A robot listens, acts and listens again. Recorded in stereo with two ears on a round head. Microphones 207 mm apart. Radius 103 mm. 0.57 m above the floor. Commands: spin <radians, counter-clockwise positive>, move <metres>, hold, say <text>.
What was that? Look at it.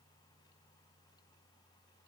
hold
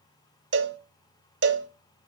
spin -0.87
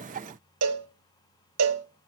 spin -1.40
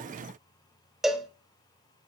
say Found it: a cowbell, straight ahead, 1 to 2 m away.